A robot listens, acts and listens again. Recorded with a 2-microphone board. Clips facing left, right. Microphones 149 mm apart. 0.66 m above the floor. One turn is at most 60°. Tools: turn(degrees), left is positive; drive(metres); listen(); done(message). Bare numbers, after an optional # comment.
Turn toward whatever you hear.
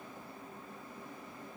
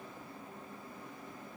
listen()
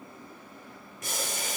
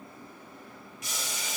# The boiling: about 50° left or 130° left.
turn(50)
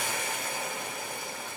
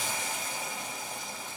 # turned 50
# So it is at 70° left.
turn(60)
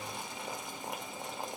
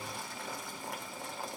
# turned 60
# The boiling is now 20° left.
turn(20)
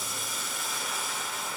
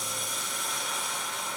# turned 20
done("Facing the boiling.")